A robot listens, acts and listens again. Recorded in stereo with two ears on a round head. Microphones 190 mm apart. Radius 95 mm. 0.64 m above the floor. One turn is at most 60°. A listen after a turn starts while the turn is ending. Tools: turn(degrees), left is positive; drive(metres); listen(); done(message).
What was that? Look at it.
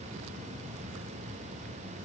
listen()
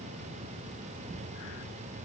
listen()
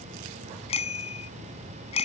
turn(degrees=30)
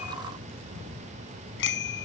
turn(degrees=60)
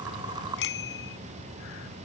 turn(degrees=60)
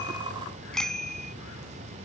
done("Facing the bicycle bell.")